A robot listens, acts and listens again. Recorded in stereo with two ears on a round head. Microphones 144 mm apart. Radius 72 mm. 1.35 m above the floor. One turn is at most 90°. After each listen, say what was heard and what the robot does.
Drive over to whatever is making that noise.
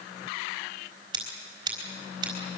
The scissors: about 25° right or 155° right. Turn 25° right.
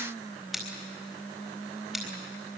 Drive 1.0 m forward.
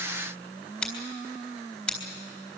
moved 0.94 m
The scissors is now 10° left. Turn 10° left.
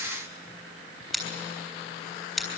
Drive 1.0 m forward.
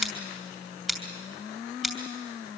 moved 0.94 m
Drive 1.0 m forward.
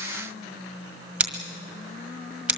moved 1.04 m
Drive 1.0 m forward.
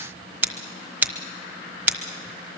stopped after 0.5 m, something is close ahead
The scissors is now 10° right. Turn 10° right.
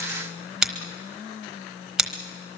I am next to the scissors.